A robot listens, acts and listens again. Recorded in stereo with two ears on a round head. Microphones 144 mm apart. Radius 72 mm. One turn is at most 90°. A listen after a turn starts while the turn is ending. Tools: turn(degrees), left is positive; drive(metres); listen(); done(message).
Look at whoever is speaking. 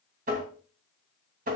listen()
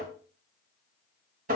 listen()
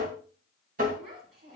turn(degrees=-60)
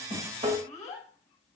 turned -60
done("Found it: a child speaking, straight ahead.")